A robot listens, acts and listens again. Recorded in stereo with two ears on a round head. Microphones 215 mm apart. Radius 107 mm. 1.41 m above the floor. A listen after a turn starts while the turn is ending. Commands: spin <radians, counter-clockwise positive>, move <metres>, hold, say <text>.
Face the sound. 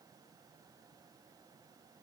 hold
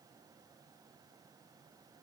hold
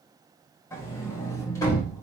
spin 0.52
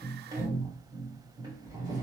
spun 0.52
spin -0.26
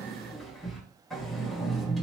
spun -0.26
say Found it: a sliding door, straight ahead, 1 to 2 m away.